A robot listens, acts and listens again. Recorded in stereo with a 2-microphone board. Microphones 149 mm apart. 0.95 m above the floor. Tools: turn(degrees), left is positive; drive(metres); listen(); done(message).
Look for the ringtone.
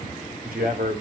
listen()
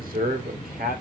listen()
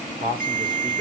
turn(degrees=-55)
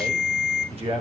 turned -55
done("Found it: a ringtone, straight ahead.")